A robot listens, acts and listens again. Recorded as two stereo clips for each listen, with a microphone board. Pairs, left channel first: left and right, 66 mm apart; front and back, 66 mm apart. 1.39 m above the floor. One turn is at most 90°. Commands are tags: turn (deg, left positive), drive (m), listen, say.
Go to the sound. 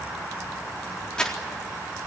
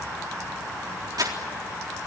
<turn deg="90"/>
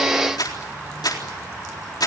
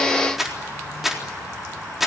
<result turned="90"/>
<turn deg="90"/>
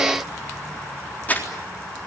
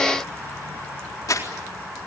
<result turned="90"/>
<turn deg="25"/>
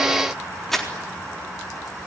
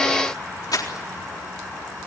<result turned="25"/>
<drive m="1.0"/>
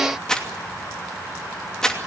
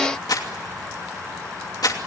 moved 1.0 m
<turn deg="10"/>
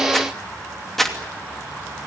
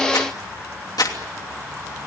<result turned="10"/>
<drive m="1.0"/>
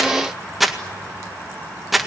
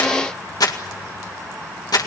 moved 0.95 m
<drive m="1.0"/>
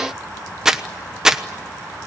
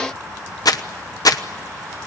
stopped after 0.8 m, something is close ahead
<turn deg="-10"/>
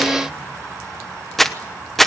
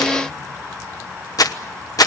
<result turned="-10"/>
<say>Arrived at the crumpling, straight ahead.</say>